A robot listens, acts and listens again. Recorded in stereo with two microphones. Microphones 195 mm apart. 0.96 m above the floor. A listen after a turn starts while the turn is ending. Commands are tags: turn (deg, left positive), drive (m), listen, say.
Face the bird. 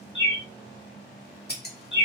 <turn deg="70"/>
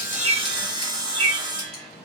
<say>Facing the bird, 2 to 4 m away.</say>